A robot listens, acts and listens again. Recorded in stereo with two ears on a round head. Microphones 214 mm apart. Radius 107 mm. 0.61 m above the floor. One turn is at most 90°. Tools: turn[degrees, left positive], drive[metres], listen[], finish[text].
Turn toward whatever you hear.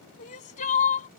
Thought: The crying: about 35° left or 145° left.
Action: turn[35]
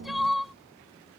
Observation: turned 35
Action: finish[Found it: crying, straight ahead.]